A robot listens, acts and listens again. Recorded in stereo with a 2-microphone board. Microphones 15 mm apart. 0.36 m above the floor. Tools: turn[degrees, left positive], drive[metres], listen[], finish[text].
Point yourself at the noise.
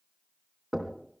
Thought: The knocking: about 20° right or 160° right.
Action: turn[-20]
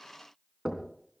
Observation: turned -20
Thought: So it is at 140° right.
Action: turn[-140]
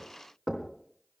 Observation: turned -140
Thought: The knocking is now 35° right.
Action: turn[-35]
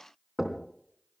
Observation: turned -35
Action: finish[Facing the knocking.]